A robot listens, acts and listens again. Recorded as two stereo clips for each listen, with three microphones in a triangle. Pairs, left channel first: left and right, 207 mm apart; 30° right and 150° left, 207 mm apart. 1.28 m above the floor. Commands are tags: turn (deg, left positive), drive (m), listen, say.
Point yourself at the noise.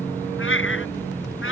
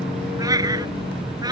<turn deg="80"/>
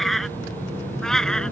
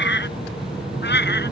<say>Found it: a cat meowing, straight ahead.</say>